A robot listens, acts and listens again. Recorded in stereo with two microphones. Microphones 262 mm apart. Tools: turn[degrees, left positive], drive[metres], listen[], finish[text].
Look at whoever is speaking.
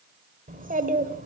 Thought: The child speaking: about 35° right or 145° right.
Action: turn[-35]
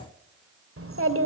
Thought: So it is at 110° right.
Action: turn[-110]
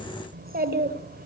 Thought: The child speaking is now 40° right.
Action: turn[-40]
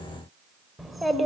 Action: finish[Found it: a child speaking, straight ahead, 1 to 2 m away.]